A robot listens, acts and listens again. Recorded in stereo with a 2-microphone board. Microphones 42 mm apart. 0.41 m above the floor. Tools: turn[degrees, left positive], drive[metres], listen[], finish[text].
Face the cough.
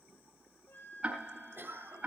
Thought: The cough: about 60° right or 120° right.
Action: turn[-60]
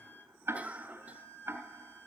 Thought: So it is at 40° right.
Action: turn[-40]
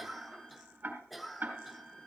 Action: finish[Facing the cough.]